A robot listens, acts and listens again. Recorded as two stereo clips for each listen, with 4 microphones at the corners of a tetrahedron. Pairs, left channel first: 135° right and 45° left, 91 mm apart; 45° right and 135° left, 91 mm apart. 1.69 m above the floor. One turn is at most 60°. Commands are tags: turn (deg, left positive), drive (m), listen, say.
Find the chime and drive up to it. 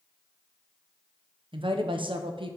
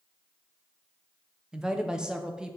<listen/>
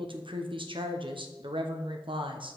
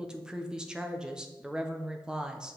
<listen/>
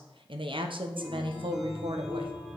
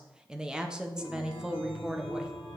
<turn deg="60"/>
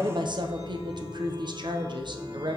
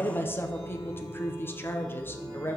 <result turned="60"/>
<turn deg="60"/>
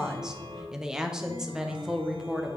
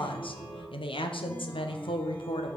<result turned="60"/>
<turn deg="40"/>
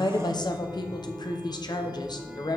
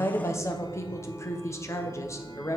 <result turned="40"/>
<turn deg="-25"/>
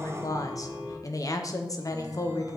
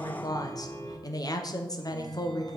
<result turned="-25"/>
<turn deg="-10"/>
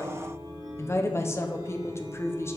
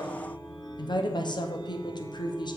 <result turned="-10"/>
<drive m="1.0"/>
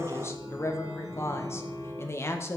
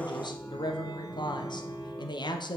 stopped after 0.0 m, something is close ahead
<say>Blocked. The chime is further on, straight ahead.</say>